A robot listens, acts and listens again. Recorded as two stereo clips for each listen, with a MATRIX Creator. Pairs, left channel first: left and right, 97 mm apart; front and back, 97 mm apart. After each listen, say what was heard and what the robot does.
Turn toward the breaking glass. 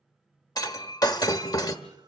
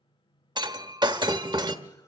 The breaking glass: 140° left. Turn 140° left.
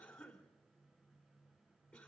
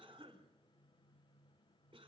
I heard breaking glass from this way, but can't make it out now.